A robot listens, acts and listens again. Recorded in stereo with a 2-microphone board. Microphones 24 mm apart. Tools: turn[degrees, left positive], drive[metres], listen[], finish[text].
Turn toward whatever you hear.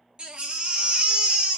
Thought: The baby crying: about 45° right or 135° right.
Action: turn[-45]
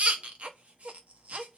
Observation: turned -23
Thought: So it is at 110° right.
Action: turn[-110]
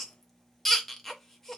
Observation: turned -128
Thought: The baby crying is now 20° left.
Action: turn[20]
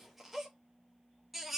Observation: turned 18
Action: finish[Facing the baby crying.]